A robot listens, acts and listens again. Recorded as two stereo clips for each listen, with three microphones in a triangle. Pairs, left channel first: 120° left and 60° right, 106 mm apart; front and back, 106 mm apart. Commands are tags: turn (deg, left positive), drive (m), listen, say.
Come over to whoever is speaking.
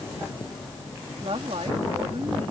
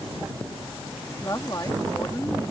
<turn deg="-50"/>
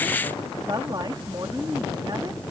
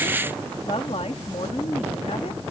<turn deg="-15"/>
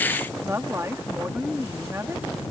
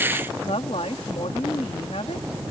<drive m="1.0"/>
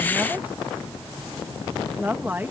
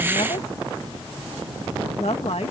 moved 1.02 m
<turn deg="10"/>
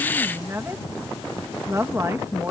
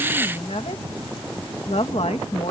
<drive m="1.0"/>
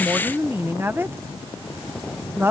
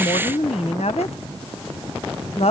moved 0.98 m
<drive m="1.0"/>
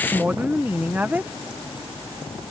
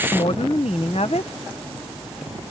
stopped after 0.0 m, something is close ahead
<turn deg="10"/>
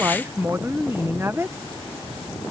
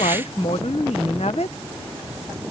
<say>Arrived at the woman speaking, straight ahead.</say>